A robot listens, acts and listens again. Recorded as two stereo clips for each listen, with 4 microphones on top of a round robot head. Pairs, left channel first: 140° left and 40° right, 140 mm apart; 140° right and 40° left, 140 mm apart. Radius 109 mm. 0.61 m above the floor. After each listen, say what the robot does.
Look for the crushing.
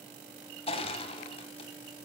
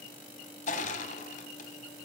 Turn 170° right.
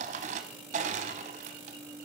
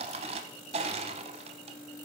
Facing the crushing, under 1 m away.